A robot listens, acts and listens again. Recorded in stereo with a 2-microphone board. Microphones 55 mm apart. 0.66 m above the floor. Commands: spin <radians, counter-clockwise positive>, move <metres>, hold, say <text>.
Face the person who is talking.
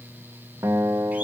hold
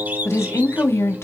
spin 1.05
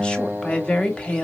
spin 0.35
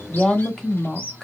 spin 0.17
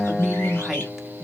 say Found it: a woman speaking, straight ahead.